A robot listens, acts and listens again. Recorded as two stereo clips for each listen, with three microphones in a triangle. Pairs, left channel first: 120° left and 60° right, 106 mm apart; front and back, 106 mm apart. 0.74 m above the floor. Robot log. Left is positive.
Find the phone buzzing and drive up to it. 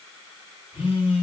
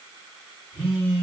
note: The phone buzzing: 90° left.
cmd yaw +90
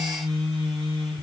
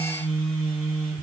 note: The phone buzzing is now 10° right.
cmd yaw -10
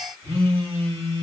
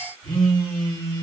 cmd fwd 1.0
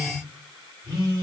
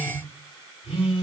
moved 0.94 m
cmd fwd 1.0
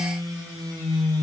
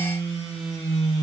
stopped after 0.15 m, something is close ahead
end: Arrived at the phone buzzing, straight ahead.